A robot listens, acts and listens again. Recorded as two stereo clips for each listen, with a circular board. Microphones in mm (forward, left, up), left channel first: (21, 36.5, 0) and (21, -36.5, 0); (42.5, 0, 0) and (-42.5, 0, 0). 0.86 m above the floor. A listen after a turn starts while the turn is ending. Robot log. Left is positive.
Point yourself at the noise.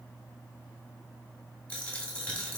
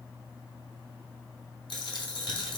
note: The dropped coin: 15° left.
cmd yaw +15
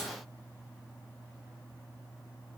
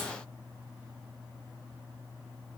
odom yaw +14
end: I heard a dropped coin from this way, but can't make it out now.